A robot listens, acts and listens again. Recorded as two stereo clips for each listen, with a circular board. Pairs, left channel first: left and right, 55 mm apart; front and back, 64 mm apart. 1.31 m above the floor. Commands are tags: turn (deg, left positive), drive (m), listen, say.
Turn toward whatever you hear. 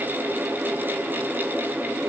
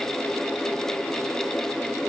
<listen/>
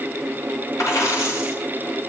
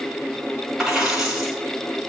<turn deg="100"/>
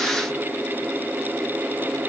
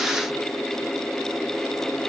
<say>I heard a dropped coin from this way, but can't make it out now.</say>